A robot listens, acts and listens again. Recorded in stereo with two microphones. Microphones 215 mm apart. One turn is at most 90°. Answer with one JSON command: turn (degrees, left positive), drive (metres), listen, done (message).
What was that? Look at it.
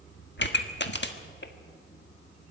{"turn": 55}
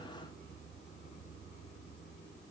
{"listen": true}
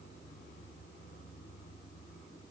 {"done": "I heard a pop, but can't make it out now. It was about straight ahead or 70° left."}